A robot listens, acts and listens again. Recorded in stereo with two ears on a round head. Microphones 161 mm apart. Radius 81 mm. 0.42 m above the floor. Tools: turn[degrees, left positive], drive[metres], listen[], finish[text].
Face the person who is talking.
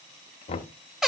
Action: listen[]
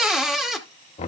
Action: listen[]
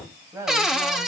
Thought: The woman speaking: about 15° right or 165° right.
Action: turn[-15]
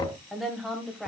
Action: turn[30]
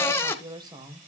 Thought: So it is at 25° right.
Action: turn[-25]
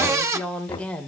Action: finish[Facing the woman speaking.]